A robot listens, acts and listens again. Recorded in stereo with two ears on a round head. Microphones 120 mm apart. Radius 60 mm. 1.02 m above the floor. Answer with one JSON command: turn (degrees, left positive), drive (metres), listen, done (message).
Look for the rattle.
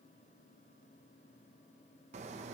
{"listen": true}
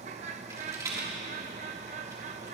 {"turn": -25}
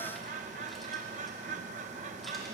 {"listen": true}
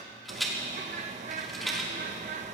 {"done": "Found it: a rattle, straight ahead, 2 to 4 m away."}